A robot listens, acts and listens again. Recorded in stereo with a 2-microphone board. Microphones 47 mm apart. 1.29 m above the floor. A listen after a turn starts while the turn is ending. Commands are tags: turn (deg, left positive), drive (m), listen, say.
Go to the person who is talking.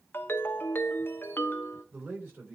<turn deg="-50"/>
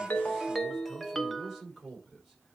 <drive m="1.0"/>
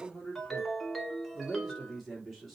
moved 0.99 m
<drive m="1.0"/>
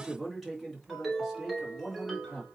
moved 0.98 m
<drive m="1.0"/>
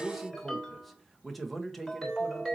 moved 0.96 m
<drive m="1.0"/>
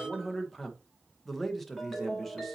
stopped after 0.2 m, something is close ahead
<say>I am next to the man speaking.</say>